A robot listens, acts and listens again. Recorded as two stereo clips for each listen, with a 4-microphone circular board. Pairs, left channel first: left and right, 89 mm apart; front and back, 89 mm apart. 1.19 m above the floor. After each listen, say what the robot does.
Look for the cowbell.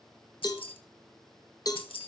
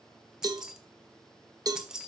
Turn 135° left.
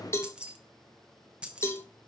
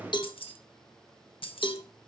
Turn 30° left.
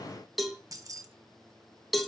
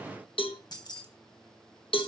Facing the cowbell.